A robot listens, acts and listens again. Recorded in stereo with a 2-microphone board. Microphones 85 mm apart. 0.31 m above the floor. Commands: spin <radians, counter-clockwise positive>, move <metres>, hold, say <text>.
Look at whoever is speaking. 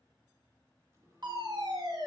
hold
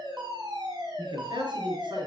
spin -1.22
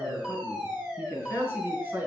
spin -0.44
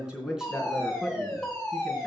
say Facing the man speaking.